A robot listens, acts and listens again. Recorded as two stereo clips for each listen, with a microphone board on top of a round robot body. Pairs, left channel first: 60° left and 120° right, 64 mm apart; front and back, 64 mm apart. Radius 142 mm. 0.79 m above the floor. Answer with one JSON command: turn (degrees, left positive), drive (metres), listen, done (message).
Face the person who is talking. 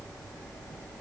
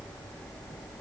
{"listen": true}
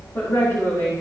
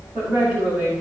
{"turn": 115}
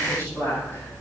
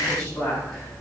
{"turn": 15}
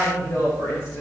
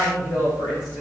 {"done": "Found it: a woman speaking, straight ahead."}